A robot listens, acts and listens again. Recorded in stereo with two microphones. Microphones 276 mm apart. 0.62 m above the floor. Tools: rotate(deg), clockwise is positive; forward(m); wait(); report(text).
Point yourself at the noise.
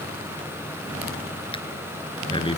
rotate(-20)
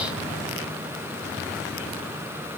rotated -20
wait()
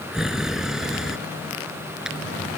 report("Facing the breathing.")